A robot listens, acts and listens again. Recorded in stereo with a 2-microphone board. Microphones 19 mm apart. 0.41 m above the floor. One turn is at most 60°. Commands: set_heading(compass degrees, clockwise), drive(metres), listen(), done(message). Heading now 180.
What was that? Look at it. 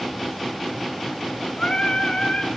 set_heading(120)
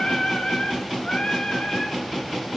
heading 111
set_heading(51)
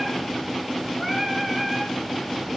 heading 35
done("Facing the singing, 2 to 4 m away.")